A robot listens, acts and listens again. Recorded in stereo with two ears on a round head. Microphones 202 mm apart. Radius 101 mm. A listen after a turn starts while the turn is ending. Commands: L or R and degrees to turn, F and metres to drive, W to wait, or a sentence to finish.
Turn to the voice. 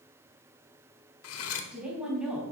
R30
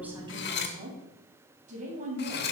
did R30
R145
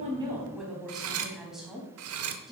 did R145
Found it: a woman speaking, straight ahead, 2 to 4 m away.